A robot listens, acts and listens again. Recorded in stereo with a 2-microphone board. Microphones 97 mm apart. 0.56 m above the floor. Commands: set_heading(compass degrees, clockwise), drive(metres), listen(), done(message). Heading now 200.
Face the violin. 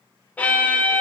set_heading(180)
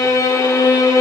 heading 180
set_heading(40)
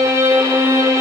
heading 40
set_heading(80)
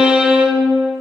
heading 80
set_heading(90)
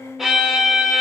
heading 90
done("Found it: a violin, straight ahead.")